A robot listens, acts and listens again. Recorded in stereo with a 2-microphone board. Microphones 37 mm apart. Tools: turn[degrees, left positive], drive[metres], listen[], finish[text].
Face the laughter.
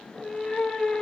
Action: listen[]
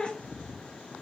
Action: listen[]
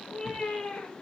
Action: finish[I can't make out laughter, only a cat meowing.]